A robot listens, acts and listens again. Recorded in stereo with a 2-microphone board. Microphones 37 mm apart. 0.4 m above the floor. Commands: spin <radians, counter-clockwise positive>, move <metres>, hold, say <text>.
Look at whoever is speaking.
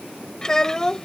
spin 0.26
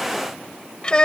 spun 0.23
spin 2.71
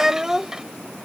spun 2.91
spin -0.35
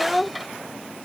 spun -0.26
say Found it: a child speaking, straight ahead.